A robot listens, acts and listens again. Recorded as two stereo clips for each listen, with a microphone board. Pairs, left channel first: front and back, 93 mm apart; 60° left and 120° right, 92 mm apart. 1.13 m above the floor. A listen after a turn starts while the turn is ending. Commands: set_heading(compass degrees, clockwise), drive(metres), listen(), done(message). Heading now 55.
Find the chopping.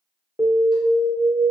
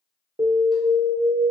listen()
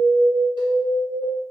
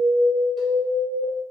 listen()
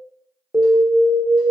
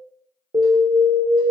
done("I can't make out chopping, only an alarm.")